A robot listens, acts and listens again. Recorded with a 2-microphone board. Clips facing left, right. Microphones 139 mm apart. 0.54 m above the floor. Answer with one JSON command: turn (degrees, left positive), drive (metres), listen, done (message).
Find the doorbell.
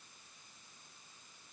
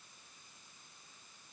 {"listen": true}
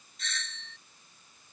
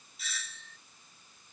{"turn": -30}
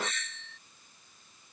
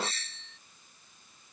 {"turn": -145}
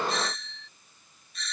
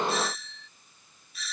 {"done": "Found it: a doorbell, straight ahead."}